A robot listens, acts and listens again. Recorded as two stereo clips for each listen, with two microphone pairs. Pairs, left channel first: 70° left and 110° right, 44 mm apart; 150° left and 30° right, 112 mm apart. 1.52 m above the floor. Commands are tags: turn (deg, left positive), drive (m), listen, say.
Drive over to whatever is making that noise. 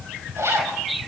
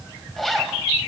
<turn deg="-125"/>
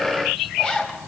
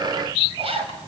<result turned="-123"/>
<drive m="1.0"/>
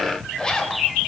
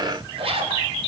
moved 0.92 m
<drive m="1.0"/>
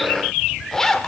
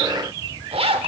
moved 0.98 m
<turn deg="-10"/>
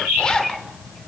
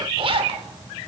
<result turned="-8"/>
<drive m="1.0"/>
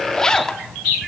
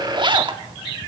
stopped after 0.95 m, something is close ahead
<say>I am next to the zipper.</say>